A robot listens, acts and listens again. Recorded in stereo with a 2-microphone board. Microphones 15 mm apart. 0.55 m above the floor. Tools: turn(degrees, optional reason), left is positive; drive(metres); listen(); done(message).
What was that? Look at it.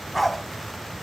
turn(degrees=30)
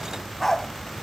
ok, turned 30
turn(degrees=30)
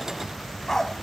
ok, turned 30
turn(degrees=160, reason="So it is at 160° left.")
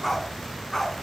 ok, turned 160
turn(degrees=20, reason="The dog barking is now 20° left.")
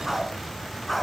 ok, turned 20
done("Facing the dog barking.")